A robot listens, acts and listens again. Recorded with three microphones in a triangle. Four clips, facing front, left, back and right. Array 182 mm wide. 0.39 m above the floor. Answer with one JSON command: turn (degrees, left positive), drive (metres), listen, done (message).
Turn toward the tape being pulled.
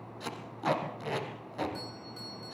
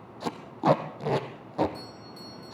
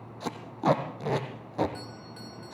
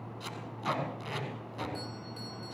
{"turn": 120}
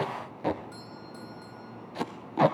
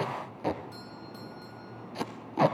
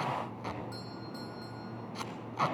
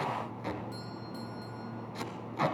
{"turn": 35}
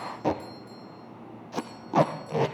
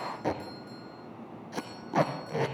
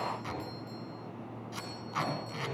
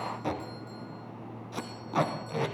{"turn": 10}
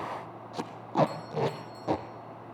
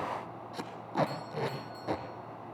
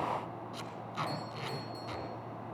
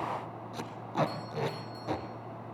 {"done": "Facing the tape being pulled."}